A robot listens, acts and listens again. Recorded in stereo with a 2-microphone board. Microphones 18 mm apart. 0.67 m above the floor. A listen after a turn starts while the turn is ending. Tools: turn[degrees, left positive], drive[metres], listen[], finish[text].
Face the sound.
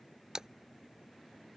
Thought: The splash: about 30° right or 150° right.
Action: turn[-30]
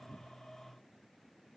Action: listen[]
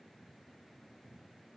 Action: finish[I heard a splash, but can't make it out now. It was about straight ahead or 120° right.]